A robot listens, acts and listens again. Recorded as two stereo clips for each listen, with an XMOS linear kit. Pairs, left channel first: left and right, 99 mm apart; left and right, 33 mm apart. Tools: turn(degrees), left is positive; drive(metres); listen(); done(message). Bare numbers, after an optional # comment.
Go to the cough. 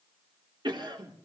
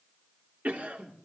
# The cough: about 55° right or 125° right.
turn(-55)
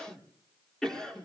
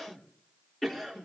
drive(1.0)
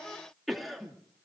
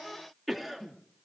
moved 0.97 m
drive(1.0)
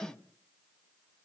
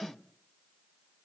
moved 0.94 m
# The cough is now 10° left.
turn(10)
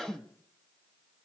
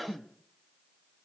drive(1.0)
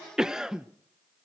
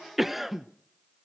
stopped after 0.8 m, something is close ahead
done("I am next to the cough.")